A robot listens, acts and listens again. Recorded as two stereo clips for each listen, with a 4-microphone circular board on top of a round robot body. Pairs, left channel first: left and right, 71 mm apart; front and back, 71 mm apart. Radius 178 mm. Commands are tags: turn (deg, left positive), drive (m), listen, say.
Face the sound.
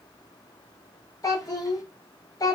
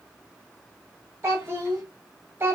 <turn deg="120"/>
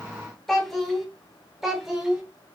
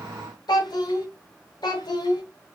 <turn deg="-10"/>
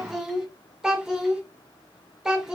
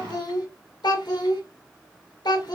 <say>Found it: a child speaking, straight ahead.</say>